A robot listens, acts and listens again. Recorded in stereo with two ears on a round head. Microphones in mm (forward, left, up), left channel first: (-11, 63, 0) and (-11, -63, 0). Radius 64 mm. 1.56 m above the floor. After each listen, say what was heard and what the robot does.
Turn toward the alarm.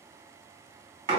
Keep listening.
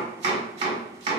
Keep listening.
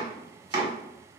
I can't make out an alarm to turn to.